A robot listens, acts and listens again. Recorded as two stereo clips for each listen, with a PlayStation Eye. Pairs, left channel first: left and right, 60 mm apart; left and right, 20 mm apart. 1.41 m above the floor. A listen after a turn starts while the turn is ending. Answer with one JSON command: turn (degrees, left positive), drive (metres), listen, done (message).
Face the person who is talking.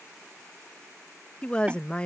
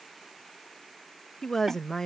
{"turn": 20}
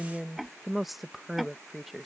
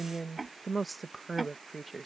{"done": "Found it: a woman speaking, straight ahead."}